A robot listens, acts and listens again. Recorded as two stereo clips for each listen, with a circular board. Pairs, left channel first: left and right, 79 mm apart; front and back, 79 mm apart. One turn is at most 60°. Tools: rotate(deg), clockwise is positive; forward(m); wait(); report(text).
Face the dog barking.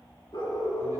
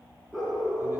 rotate(-60)
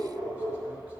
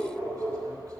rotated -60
rotate(-60)
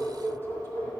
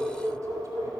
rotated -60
rotate(-25)
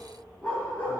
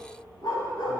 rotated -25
rotate(-25)
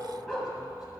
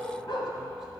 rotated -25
rotate(-10)
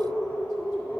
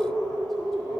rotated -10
rotate(-20)
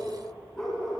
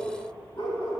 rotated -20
report("Found it: a dog barking, straight ahead, 1 to 2 m away.")